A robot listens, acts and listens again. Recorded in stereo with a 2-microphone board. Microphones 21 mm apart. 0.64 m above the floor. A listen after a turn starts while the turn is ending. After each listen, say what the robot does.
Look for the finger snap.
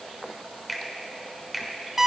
Turn 30° left.
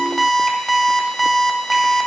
Keep listening.
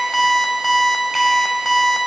Keep listening.
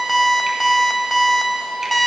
I heard a finger snap, but can't make it out now. It was about 30° right or 150° left.